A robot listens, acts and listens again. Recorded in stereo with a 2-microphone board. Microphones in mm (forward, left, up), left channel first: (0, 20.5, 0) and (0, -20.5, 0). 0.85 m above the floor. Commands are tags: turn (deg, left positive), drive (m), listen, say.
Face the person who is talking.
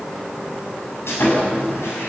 <listen/>
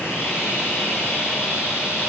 <listen/>
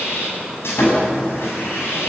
<say>I can't make out anyone speaking to turn to.</say>